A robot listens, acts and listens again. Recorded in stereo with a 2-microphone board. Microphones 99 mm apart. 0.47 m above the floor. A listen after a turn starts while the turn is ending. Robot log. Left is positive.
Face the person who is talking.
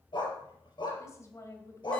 note: The woman speaking: about 30° left or 150° left.
cmd yaw +30
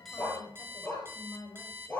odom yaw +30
note: So it is at 135° left.
cmd yaw +135
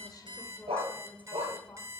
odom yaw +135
note: The woman speaking is now 20° left.
cmd yaw +20
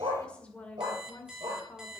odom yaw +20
note: The woman speaking is now 10° left.
cmd yaw +10
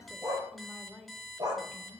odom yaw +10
end: Found it: a woman speaking, straight ahead, 1 to 2 m away.